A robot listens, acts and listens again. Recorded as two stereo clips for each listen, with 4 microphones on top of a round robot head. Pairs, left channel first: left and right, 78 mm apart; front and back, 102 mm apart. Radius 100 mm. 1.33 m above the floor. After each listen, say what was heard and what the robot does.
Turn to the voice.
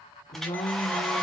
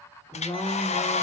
The woman speaking: 65° left. Turn 65° left.
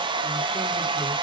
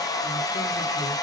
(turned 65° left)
Keep listening.
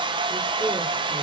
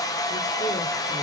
Keep listening.
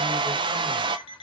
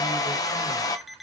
Facing where the woman speaking came from. I can't hear it now.